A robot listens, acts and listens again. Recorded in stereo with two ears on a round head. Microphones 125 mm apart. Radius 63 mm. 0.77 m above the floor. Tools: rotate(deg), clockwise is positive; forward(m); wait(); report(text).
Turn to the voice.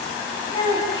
rotate(-30)
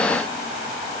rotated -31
wait()
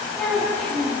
report("Facing the child speaking, over 4 m away.")